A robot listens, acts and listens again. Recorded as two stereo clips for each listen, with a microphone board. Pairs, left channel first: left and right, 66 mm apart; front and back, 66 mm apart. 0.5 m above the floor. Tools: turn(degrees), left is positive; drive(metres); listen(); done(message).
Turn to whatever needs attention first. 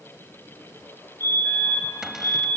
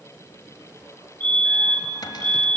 turn(degrees=-65)
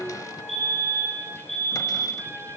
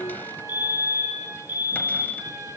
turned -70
done("Found it: a fire alarm, straight ahead.")